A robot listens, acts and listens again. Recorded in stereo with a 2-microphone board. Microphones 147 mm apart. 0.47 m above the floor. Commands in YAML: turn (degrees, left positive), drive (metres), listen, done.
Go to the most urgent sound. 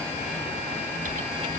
listen: true
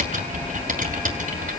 listen: true
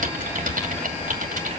done: "I can't make out anything urgent to turn to."